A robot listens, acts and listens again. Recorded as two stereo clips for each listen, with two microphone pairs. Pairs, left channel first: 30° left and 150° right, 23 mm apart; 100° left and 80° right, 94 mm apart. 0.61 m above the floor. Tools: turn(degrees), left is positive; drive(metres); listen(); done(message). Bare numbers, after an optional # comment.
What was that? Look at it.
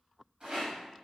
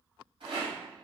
# The rattle: 95° right.
turn(-95)
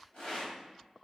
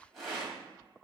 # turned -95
# The rattle is now 10° left.
turn(10)
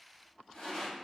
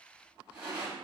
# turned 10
done("Found it: a rattle, straight ahead, 1 to 2 m away.")